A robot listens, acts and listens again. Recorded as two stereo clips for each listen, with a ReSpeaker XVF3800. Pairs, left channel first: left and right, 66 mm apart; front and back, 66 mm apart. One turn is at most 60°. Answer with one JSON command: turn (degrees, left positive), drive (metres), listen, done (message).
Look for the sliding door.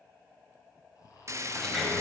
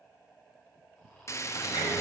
{"done": "Found it: a sliding door, straight ahead, over 4 m away."}